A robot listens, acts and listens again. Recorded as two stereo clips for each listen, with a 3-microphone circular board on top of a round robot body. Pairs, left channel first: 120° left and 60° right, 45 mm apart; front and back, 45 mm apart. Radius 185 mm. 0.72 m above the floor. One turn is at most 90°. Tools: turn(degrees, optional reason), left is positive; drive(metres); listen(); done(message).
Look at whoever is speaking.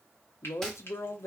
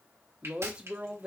turn(degrees=90, reason="The woman speaking: 115° left.")
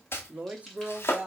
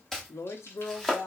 done("Found it: a woman speaking, straight ahead.")